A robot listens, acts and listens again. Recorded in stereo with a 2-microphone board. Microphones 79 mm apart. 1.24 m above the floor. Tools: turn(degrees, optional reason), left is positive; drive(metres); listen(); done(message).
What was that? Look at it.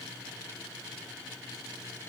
listen()
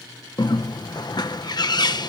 turn(degrees=60, reason="The bird: about 60° left or 120° left.")
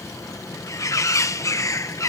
turn(degrees=45, reason="So it is at 45° left.")
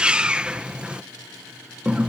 turn(degrees=-15, reason="The bird is now 15° right.")
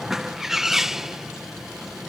done("Found it: a bird, straight ahead.")